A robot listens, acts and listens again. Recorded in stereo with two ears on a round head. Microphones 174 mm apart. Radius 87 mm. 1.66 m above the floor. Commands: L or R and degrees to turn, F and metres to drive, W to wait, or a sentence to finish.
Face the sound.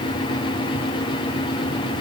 W
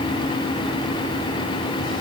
W
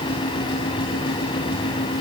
I can't make out anything to turn to.